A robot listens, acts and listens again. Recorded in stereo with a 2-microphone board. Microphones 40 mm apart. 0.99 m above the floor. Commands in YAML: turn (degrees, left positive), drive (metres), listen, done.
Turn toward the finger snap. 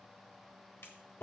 turn: 90
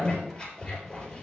listen: true
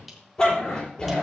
listen: true
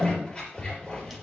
done: "I heard a finger snap from this way, but can't make it out now."